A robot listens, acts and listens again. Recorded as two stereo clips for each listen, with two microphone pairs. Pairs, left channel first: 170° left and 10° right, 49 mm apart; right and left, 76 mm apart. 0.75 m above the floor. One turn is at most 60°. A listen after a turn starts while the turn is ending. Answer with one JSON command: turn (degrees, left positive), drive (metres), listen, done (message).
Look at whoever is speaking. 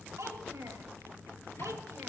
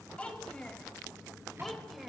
{"done": "Found it: a child speaking, straight ahead."}